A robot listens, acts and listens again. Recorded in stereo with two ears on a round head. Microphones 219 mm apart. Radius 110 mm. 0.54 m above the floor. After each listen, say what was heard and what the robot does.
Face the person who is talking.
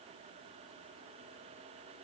Keep listening.
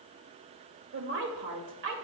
The woman speaking: about 55° right or 125° right. Turn 55° right.
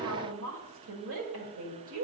So it is at 65° right. Turn 65° right.
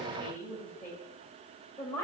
The woman speaking is now 10° left. Turn 10° left.
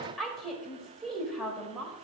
Facing the woman speaking, 1 to 2 m away.